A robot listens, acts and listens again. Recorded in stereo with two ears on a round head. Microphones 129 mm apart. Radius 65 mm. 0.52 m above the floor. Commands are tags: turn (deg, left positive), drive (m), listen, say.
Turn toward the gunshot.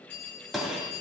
<turn deg="30"/>
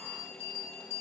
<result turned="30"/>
<listen/>
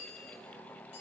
<say>I heard a gunshot, but can't make it out now. It was about 30° right or 150° left.</say>